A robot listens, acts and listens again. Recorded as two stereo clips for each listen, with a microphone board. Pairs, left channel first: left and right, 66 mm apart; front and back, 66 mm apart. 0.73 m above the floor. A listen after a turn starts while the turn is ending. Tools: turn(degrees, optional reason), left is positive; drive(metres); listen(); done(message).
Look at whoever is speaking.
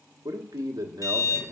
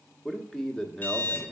turn(degrees=-80, reason="The man speaking: 80° right.")
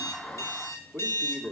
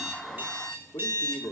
turn(degrees=-10, reason="The man speaking is now 10° right.")
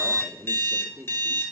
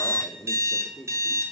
done("Found it: a man speaking, straight ahead, 1 to 2 m away.")